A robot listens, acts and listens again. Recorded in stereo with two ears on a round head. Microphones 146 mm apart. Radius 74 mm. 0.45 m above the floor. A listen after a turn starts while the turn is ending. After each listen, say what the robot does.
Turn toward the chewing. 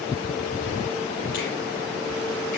Keep listening.
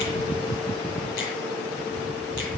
Keep listening.
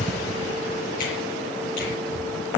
I can't make out chewing to turn to.